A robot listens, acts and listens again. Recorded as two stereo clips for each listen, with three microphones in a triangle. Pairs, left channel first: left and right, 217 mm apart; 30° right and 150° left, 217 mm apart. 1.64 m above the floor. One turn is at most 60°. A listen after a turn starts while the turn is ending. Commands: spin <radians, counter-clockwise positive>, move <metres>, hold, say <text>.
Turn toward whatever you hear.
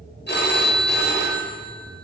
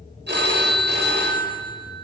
spin 1.05
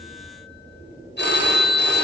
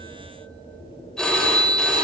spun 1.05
spin 0.96
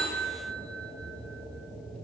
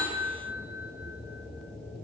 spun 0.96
hold
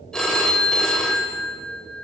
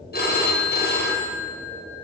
say Facing the phone ringing, 1 to 2 m away.